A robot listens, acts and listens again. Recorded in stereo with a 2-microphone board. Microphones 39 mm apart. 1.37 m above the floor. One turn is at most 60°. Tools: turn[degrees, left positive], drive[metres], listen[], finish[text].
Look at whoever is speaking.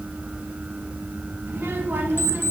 Thought: The child speaking: about 60° right or 120° right.
Action: turn[-60]
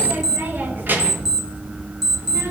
Thought: So it is at 55° right.
Action: turn[-55]
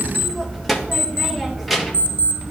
Action: finish[Found it: a child speaking, straight ahead, 1 to 2 m away.]